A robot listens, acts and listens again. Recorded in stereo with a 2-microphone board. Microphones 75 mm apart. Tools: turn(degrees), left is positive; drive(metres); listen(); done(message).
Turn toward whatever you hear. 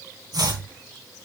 turn(degrees=-75)
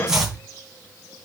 turn(degrees=-10)
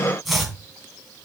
done("Facing the chopping.")